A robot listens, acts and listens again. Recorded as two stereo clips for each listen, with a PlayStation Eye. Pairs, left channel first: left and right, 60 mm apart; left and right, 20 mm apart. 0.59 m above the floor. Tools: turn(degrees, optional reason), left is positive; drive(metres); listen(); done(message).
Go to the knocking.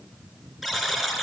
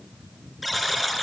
listen()
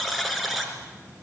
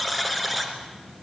listen()
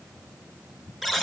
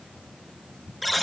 done("I can't make out knocking, only a buzzer.")